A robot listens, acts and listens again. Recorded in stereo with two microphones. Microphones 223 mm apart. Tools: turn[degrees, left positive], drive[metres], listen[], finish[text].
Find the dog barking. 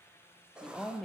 Action: listen[]
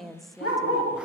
Action: turn[90]
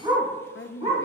Thought: So it is at 25° right.
Action: turn[-25]
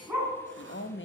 Thought: The dog barking is now 10° right.
Action: turn[-10]
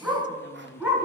Thought: The dog barking is now 10° right.
Action: turn[-10]
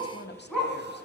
Action: finish[Facing the dog barking, 2 to 4 m away.]